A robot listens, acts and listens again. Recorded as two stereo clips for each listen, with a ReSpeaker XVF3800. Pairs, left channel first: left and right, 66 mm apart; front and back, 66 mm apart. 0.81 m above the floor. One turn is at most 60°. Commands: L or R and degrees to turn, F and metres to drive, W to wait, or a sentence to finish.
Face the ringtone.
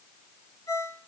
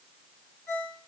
L60
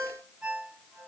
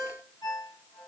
Facing the ringtone.